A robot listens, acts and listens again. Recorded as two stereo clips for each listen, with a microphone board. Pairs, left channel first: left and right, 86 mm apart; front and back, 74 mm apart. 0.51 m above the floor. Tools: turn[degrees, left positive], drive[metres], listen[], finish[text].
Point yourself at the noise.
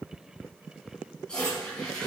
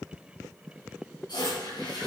Thought: The toilet flushing: 10° left.
Action: turn[10]
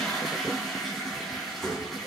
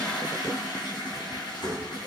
Action: finish[Facing the toilet flushing, 2 to 4 m away.]